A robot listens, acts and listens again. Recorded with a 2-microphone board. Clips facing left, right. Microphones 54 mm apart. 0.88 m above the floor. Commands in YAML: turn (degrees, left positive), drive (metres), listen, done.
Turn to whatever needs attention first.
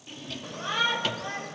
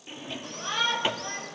turn: 30
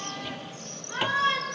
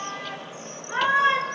turn: -25
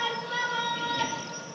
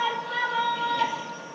turn: -10
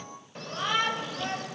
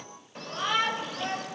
done: "Found it: a shout, straight ahead, over 4 m away."